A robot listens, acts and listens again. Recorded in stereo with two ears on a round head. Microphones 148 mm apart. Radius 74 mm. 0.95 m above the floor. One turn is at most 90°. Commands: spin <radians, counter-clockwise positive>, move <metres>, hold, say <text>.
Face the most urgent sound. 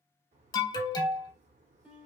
spin 0.44
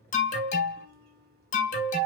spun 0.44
spin 1.57
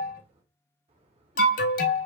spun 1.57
spin 1.05
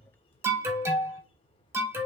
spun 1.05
spin -0.26
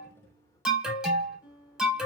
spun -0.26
say Facing the alarm, under 1 m away.